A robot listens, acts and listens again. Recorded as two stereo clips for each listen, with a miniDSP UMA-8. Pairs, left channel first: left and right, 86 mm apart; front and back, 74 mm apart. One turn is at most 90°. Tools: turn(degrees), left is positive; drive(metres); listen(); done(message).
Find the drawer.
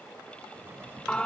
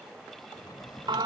turn(degrees=-25)
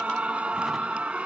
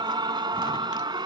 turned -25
listen()
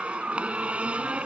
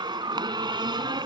listen()
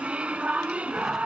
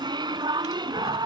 done("Facing where the drawer came from. I can't hear it now.")